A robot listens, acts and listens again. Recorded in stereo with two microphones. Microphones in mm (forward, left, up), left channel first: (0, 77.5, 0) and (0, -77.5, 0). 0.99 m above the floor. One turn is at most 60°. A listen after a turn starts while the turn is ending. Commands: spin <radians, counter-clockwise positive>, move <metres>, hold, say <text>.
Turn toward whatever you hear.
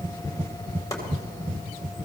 spin 0.35
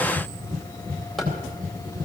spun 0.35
hold
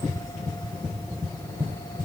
hold
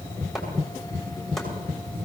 say I heard chopping, but can't make it out now. It was about straight ahead or 140° left.